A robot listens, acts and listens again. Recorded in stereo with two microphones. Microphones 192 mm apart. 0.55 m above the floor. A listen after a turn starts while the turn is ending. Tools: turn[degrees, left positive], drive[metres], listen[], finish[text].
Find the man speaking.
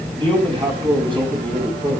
Thought: The man speaking: about 25° right or 155° right.
Action: turn[-25]
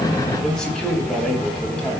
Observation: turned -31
Action: finish[Found it: a man speaking, straight ahead.]